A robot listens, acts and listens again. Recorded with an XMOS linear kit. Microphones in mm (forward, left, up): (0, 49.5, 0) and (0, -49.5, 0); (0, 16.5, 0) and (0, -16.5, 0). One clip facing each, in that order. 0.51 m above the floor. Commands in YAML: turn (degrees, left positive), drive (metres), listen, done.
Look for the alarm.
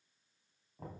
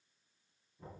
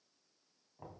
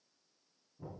listen: true
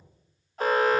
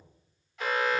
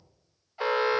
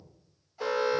turn: 40
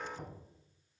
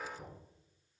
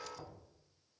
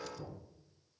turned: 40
listen: true
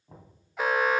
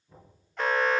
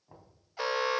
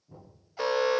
turn: 10
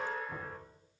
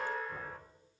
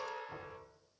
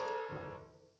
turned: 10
done: "Facing the alarm, under 1 m away."